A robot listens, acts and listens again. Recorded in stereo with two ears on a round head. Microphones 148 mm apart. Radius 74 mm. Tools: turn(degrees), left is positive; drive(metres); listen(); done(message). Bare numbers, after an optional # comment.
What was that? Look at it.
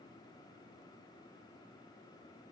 listen()
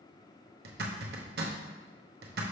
# The zipper: about 65° right or 115° right.
turn(-65)
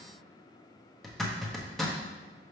done("Found it: a zipper, straight ahead.")